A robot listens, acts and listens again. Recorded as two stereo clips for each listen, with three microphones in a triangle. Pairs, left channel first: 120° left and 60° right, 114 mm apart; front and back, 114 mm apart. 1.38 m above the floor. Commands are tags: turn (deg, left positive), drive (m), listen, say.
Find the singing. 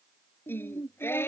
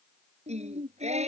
<turn deg="-170"/>
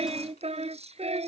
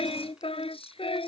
<turn deg="-35"/>
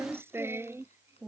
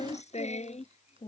<say>Facing the singing.</say>